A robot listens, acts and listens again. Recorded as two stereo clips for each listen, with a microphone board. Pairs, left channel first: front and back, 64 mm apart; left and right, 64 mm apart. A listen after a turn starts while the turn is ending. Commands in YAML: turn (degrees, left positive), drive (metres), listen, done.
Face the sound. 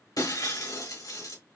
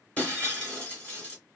turn: 20
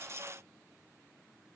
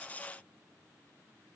done: "Facing where the breaking glass came from. I can't hear it now."